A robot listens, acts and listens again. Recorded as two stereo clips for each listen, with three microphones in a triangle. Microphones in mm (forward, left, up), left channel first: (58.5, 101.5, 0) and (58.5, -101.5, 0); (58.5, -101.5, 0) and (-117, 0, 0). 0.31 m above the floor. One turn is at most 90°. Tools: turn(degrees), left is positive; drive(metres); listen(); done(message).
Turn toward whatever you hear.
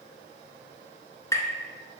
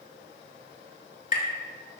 turn(degrees=15)
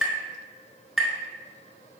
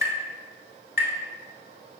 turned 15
done("Found it: tapping, straight ahead, under 1 m away.")